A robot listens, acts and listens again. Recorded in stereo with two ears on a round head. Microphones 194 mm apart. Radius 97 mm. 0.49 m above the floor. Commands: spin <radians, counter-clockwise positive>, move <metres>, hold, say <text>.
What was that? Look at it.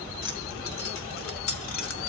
spin 1.22
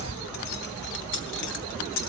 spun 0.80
spin 1.13
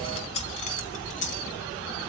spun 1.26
spin 0.61
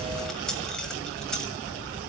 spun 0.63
say Found it: keys jangling, straight ahead, 1 to 2 m away.